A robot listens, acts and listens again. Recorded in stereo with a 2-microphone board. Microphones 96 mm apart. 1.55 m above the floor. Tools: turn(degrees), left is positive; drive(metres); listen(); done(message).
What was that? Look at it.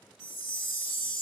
turn(degrees=30)
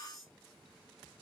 listen()
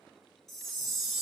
done("Facing the chime, 2 to 4 m away.")